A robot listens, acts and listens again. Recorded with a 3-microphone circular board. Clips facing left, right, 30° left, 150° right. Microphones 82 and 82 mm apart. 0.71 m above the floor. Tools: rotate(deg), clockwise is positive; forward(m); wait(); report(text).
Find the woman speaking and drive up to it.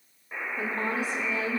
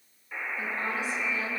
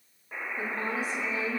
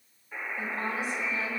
rotate(-65)
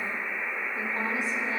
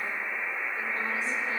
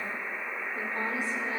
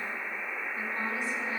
rotate(-20)
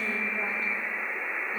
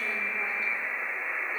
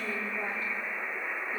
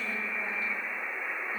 wait()
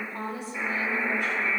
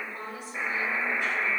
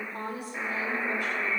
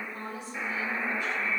forward(1.0)
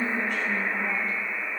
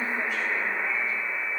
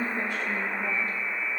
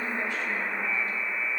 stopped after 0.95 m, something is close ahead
report("I am next to the woman speaking.")